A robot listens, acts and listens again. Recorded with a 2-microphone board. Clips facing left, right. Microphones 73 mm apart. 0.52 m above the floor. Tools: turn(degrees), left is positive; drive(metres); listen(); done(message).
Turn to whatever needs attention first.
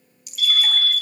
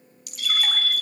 turn(degrees=-20)
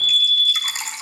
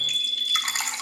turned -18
turn(degrees=-145)
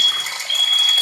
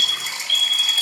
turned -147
turn(degrees=10)
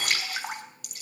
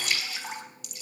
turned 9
listen()
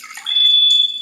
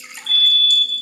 done("Facing the fire alarm, 2 to 4 m away.")